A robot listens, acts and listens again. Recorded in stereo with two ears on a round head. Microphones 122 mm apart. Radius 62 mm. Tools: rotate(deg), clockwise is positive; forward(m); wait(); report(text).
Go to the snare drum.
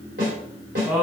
rotate(60)
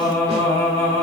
wait()
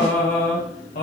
wait()
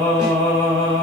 report("I heard a snare drum, but can't make it out now. It was about straight ahead or 60° right. I did not reach it.")